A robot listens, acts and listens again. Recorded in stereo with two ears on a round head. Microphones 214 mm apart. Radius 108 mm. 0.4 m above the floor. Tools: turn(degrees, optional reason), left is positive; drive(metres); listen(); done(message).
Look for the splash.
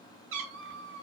listen()
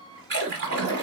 turn(degrees=-45, reason="The splash: about 45° right or 135° right.")
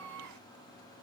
listen()
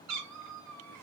done("I heard a splash, but can't make it out now. It was about straight ahead or 90° right.")